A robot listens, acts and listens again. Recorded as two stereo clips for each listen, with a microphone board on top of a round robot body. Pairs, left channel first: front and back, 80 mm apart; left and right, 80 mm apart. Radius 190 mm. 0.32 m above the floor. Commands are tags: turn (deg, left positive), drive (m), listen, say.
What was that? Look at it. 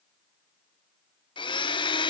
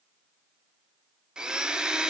<turn deg="-10"/>
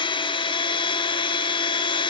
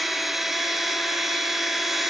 <say>Found it: a blender, straight ahead, 1 to 2 m away.</say>